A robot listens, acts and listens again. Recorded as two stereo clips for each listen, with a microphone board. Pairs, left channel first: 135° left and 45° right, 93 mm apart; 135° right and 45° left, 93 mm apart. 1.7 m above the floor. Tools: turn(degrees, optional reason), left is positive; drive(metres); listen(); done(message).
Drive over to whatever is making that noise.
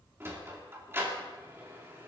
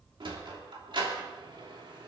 turn(degrees=20, reason="The sliding door: 20° left.")
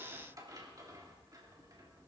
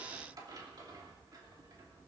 drive(metres=1.0)
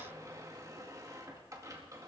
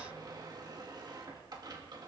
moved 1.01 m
drive(metres=1.0)
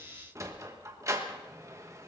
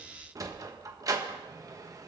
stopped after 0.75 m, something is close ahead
done("Arrived at the sliding door, straight ahead.")